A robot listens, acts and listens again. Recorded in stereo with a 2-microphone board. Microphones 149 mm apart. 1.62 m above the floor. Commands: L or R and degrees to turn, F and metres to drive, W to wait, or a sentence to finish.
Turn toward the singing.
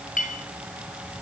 W
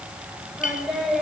L30
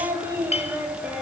R30
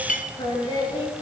L35
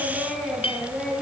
L10
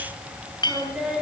Found it: singing, straight ahead.